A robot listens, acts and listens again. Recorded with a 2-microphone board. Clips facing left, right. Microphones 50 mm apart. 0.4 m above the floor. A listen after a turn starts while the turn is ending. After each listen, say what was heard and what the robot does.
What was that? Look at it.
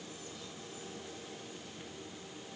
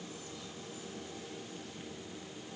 Keep listening.
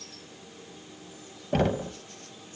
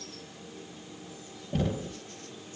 The knocking: about 65° left or 115° left. Turn 65° left.
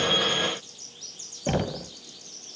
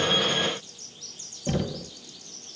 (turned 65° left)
So it is at 40° left. Turn 40° left.
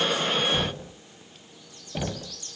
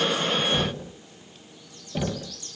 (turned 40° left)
Facing the knocking.